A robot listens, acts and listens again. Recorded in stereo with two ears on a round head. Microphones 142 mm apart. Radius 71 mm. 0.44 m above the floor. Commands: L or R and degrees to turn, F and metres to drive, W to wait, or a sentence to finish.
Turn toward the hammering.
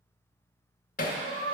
L55
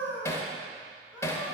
L20
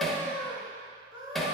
Facing the hammering, under 1 m away.